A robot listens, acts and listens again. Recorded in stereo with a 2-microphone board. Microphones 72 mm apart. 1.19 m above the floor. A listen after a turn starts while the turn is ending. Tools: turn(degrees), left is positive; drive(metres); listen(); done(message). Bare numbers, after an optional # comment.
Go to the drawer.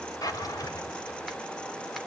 # The drawer: about 55° left or 125° left.
turn(55)
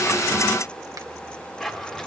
drive(1.0)
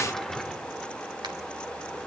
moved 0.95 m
drive(1.0)
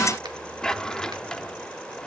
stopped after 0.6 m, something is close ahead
# The drawer is now 10° left.
turn(10)
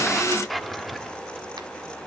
done("Arrived at the drawer, straight ahead.")